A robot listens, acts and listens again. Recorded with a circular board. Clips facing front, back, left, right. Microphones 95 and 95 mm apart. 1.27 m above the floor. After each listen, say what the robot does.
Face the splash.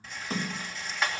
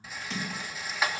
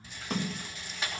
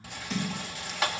Turn 50° left.
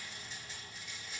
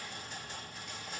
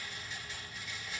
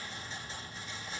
Facing where the splash came from. I can't hear it now.